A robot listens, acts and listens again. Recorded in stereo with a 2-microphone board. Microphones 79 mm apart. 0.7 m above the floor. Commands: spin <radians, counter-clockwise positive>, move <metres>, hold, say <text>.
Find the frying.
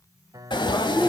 spin 1.57
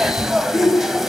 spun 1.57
say Found it: frying, straight ahead, 1 to 2 m away.